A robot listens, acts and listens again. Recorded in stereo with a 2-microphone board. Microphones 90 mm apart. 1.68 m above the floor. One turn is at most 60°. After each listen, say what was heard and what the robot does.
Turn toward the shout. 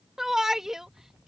Turn 30° right.
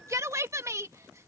So it is at 145° right. Turn 60° right.
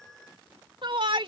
The shout is now 65° right. Turn 60° right.
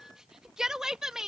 Found it: a shout, straight ahead.